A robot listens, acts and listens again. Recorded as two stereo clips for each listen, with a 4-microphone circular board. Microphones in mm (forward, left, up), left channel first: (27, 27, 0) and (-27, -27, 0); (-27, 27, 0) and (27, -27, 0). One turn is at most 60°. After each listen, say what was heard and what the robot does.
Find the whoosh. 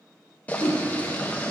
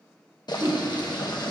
The whoosh: 15° left. Turn 15° left.
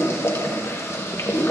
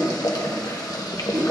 Facing the whoosh.